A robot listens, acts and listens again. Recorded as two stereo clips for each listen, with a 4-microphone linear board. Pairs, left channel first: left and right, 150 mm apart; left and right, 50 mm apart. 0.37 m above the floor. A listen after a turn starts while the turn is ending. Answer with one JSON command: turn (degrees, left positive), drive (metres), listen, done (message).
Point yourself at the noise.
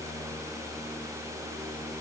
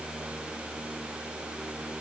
{"listen": true}
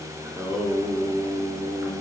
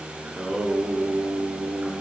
{"turn": -30}
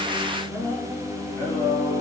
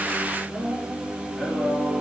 {"turn": 15}
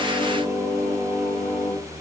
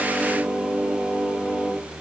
{"done": "Found it: singing, straight ahead, over 4 m away."}